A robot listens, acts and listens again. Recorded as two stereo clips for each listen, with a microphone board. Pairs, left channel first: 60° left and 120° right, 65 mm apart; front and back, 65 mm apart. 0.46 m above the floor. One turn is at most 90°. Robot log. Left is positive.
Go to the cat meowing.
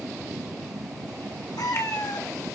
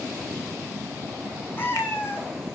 note: The cat meowing: 55° left.
cmd yaw +55
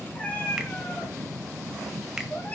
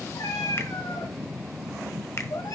cmd fwd 1.0
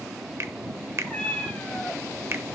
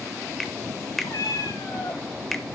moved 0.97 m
note: The cat meowing is now 10° right.
cmd yaw -10
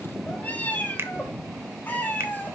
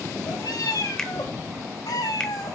cmd fwd 1.0
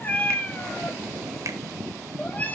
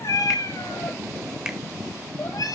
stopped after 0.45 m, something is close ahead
end: I am next to the cat meowing.